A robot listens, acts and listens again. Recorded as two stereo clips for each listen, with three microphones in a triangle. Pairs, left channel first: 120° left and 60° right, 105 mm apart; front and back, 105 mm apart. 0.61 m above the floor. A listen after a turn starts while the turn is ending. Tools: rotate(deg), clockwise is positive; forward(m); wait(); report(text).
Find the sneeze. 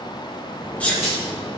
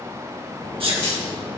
rotate(165)
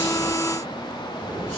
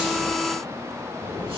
report("Facing where the sneeze came from. I can't hear it now.")